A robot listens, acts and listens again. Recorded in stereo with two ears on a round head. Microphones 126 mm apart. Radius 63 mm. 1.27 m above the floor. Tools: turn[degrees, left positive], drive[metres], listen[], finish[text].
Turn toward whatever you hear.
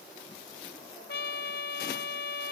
Action: turn[90]
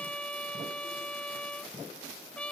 Thought: So it is at 10° left.
Action: turn[10]
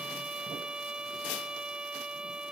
Action: finish[Found it: a trumpet, straight ahead.]